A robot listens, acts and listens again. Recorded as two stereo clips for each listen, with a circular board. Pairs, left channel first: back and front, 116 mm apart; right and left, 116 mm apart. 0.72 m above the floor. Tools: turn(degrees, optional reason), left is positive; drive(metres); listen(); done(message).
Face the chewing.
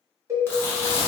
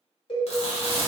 turn(degrees=-110, reason="The chewing: 110° right.")
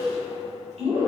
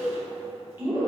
turn(degrees=20, reason="The chewing is now 20° left.")
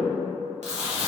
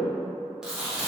done("Found it: chewing, straight ahead.")